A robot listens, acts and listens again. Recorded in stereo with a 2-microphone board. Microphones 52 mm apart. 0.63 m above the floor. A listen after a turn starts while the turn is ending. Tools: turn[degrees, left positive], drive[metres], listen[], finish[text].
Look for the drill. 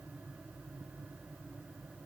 Action: listen[]
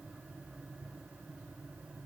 Action: listen[]
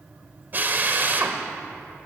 Thought: The drill: about 40° right or 140° right.
Action: turn[-40]
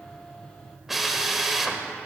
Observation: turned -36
Action: finish[Found it: a drill, straight ahead, 1 to 2 m away.]